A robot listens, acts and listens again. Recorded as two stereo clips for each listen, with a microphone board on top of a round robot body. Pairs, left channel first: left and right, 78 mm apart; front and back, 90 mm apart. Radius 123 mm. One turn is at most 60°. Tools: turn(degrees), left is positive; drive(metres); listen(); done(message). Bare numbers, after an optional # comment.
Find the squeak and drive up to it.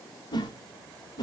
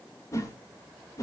listen()
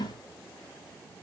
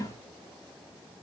listen()
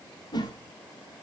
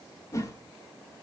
done("I can't make out a squeak to turn to.")